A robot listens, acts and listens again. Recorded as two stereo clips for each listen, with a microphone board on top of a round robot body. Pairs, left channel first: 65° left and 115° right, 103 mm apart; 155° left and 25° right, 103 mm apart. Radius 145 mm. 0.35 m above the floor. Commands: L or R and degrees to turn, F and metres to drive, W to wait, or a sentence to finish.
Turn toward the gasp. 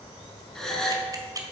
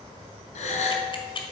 L150
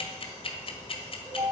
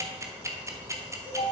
I heard a gasp from this way, but can't make it out now.